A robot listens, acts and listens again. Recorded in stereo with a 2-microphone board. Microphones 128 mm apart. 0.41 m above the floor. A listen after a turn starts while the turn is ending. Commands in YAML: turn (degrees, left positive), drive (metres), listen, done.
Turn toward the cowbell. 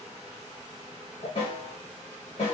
listen: true
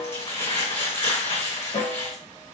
listen: true
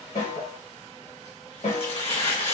done: "I can't make out a cowbell, only a snare drum and crumpling."